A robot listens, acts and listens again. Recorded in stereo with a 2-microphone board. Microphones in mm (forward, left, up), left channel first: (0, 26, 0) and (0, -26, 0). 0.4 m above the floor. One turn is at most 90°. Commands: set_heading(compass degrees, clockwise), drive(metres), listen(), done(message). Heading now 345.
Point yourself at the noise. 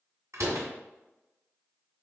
set_heading(60)
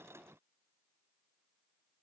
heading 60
listen()
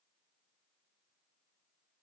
done("I heard a door slam, but can't make it out now. It was about straight ahead or 30° right.")